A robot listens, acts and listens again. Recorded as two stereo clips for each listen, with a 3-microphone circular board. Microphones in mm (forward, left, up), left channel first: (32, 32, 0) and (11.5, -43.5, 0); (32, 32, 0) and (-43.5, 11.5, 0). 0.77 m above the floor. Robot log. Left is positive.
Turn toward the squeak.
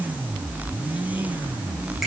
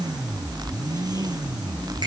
cmd idle
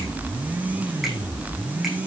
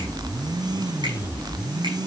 cmd idle
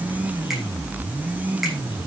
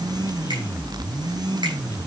end: I can't make out a squeak to turn to.